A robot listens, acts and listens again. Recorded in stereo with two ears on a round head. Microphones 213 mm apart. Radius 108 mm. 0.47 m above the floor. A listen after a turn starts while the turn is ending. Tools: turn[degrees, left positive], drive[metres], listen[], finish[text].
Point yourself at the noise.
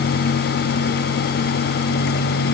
Action: listen[]
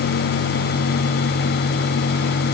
Action: listen[]
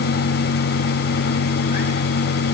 Action: finish[I can't make out anything.]